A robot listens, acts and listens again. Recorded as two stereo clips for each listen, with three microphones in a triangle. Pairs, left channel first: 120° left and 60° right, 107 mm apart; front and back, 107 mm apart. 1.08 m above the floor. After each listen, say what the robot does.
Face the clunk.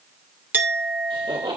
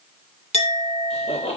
Keep listening.
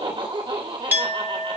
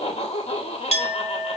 Keep listening.
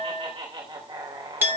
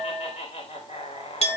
I can't make out a clunk to turn to.